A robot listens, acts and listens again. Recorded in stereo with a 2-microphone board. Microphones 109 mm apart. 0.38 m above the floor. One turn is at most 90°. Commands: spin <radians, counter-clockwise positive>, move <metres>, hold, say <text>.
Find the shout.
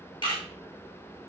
hold
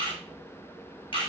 hold
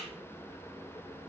say I can't make out a shout, only a camera shutter.